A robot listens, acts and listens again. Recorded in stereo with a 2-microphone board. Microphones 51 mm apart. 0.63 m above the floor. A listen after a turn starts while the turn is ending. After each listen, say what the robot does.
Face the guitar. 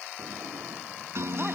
Turn 60° right.
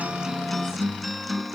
Found it: a guitar, straight ahead.